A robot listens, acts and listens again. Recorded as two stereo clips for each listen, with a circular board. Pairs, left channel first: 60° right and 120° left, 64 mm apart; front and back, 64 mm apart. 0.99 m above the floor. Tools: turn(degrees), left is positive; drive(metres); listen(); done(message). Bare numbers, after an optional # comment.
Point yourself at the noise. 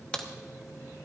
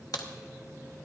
# The crack: 15° left.
turn(15)
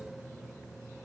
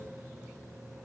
done("I heard a crack from this way, but can't make it out now.")